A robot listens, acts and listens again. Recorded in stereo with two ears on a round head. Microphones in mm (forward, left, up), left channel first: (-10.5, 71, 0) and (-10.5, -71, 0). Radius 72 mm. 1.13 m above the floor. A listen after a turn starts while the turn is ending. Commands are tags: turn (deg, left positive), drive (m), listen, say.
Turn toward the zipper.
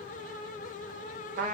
<listen/>
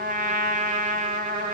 <listen/>
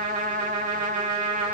<say>I can't make out a zipper, only a trumpet.</say>